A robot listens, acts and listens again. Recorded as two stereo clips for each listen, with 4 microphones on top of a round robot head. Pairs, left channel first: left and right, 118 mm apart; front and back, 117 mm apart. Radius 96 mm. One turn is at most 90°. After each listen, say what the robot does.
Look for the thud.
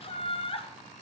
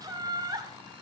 Keep listening.
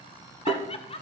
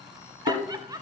Turn 20° right.
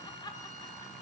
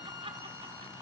I heard a thud from this way, but can't make it out now.